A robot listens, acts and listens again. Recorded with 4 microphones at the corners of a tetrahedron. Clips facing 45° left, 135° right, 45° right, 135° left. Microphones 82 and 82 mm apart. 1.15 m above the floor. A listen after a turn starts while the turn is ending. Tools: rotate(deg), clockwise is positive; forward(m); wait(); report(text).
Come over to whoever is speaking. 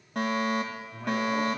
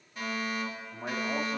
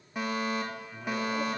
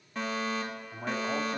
rotate(-170)
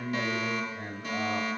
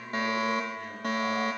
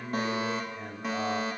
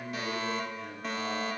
forward(1.0)
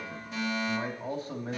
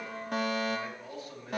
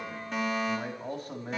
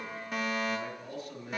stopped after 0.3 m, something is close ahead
report("Something is in my way. I am facing the man speaking but have not reached it.")